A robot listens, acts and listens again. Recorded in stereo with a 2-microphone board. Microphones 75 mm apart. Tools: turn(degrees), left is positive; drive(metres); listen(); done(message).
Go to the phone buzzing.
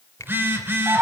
turn(degrees=-30)
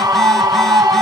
listen()
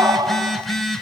drive(metres=1.0)
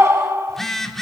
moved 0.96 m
drive(metres=1.0)
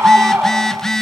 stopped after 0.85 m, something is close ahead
done("I am next to the phone buzzing.")